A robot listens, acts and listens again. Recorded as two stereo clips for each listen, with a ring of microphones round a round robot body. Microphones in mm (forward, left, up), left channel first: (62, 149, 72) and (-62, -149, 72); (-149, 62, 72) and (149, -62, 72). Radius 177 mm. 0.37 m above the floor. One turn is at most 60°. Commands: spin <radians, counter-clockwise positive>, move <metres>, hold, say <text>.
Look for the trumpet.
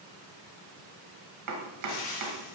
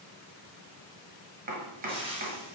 hold
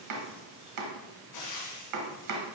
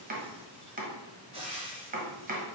hold
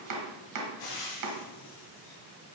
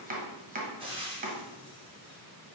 say I can't make out a trumpet to turn to.